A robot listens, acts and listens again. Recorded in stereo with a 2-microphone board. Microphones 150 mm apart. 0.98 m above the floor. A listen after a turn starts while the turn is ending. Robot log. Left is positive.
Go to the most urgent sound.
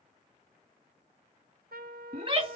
note: The shout: about 40° right or 140° right.
cmd yaw -40
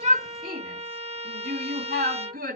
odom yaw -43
note: So it is at 100° right.
cmd yaw -100
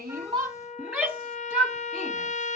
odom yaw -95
cmd fwd 1.0
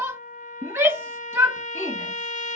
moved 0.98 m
note: The shout is now 15° right.
cmd yaw -15
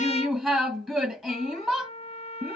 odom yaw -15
cmd fwd 1.0
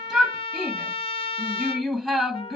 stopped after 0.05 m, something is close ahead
end: Arrived at the shout, straight ahead.